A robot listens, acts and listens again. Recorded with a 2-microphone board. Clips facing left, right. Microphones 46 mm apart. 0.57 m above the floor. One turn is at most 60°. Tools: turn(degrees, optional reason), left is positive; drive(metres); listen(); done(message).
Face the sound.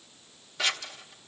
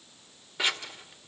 turn(degrees=-20, reason="The scissors: about 20° right or 160° right.")
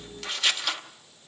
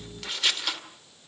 done("Facing the scissors.")